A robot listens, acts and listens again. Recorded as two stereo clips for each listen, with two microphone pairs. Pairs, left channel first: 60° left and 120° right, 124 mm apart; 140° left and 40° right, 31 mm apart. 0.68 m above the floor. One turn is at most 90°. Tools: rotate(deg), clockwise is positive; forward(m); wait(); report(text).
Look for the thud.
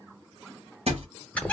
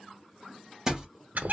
rotate(90)
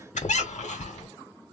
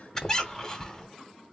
rotate(15)
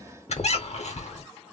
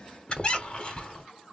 report("I heard a thud from this way, but can't make it out now.")